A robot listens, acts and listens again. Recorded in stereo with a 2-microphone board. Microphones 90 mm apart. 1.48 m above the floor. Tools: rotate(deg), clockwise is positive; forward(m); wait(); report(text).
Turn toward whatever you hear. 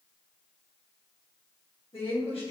rotate(-90)
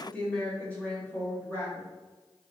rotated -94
rotate(-25)
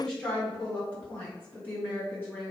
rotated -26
rotate(-15)
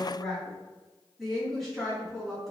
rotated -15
report("Found it: a woman speaking, straight ahead.")